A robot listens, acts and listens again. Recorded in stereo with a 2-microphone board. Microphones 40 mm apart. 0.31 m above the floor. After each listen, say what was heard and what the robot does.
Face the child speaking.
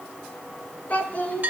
The child speaking: about 35° left or 145° left. Turn 35° left.
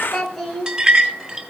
Found it: a child speaking, straight ahead, 2 to 4 m away.